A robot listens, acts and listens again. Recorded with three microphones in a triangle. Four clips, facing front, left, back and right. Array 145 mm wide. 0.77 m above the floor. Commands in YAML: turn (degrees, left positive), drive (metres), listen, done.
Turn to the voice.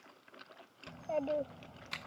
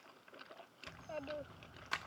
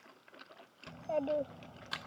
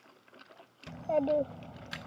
turn: -95
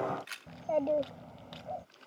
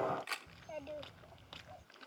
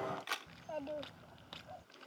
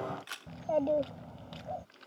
turn: -45
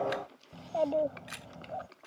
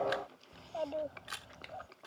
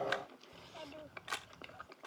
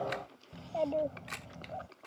turn: -10
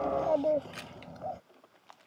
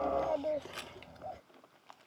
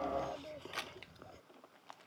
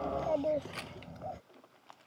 done: "Found it: a child speaking, straight ahead."